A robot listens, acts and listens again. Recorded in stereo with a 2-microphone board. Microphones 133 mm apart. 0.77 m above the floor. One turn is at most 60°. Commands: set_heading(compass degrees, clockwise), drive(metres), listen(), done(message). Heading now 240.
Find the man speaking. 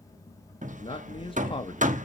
set_heading(200)
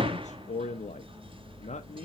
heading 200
set_heading(140)
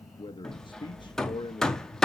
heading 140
set_heading(100)
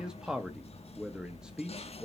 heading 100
done("Facing the man speaking, under 1 m away.")